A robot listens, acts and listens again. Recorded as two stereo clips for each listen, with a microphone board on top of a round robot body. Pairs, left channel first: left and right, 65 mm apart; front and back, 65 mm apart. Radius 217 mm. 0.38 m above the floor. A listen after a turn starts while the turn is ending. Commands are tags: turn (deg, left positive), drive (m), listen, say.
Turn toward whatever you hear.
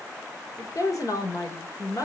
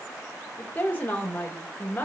<turn deg="65"/>
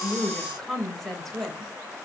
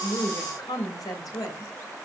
<say>Found it: a woman speaking, straight ahead, 2 to 4 m away.</say>